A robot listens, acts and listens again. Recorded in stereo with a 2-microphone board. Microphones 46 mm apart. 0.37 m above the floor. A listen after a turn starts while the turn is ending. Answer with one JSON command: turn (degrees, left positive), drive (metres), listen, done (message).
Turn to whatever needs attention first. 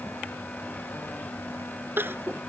{"turn": -55}
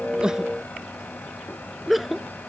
{"done": "Found it: crying, straight ahead."}